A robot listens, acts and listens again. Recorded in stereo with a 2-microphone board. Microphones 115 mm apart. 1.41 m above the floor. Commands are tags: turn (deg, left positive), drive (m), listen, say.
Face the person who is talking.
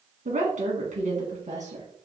<turn deg="-75"/>
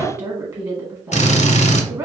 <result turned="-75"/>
<turn deg="-30"/>
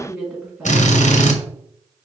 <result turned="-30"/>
<turn deg="-20"/>
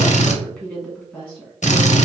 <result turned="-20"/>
<say>Found it: a woman speaking, straight ahead.</say>